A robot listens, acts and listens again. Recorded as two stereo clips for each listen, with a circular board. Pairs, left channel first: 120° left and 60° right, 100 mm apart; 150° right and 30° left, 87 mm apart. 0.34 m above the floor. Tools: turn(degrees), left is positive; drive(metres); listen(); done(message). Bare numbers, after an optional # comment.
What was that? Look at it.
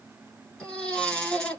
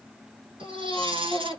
# The baby crying: 40° left.
turn(40)
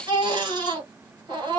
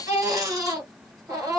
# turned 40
# The baby crying is now 20° right.
turn(-20)
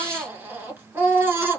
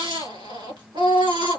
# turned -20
done("Facing the baby crying.")